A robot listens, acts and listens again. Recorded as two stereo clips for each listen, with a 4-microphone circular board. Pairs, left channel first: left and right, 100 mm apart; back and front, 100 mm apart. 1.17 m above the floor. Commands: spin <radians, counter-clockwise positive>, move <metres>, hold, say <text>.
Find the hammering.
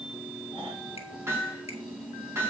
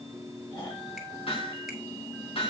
spin -2.71
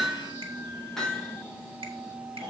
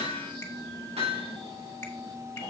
say Found it: hammering, straight ahead.